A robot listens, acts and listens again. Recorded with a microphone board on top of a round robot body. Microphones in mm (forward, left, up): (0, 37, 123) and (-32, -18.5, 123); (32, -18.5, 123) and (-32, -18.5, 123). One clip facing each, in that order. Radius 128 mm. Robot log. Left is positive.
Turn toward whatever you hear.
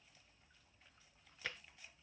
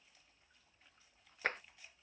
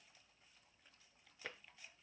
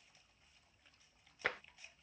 note: The tapping: 165° right.
cmd yaw -165
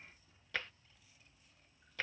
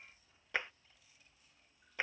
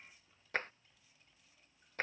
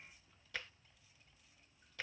note: The tapping is now 50° right.
cmd yaw -50
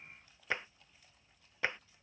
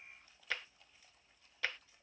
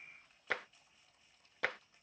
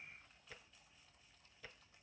end: Facing the tapping.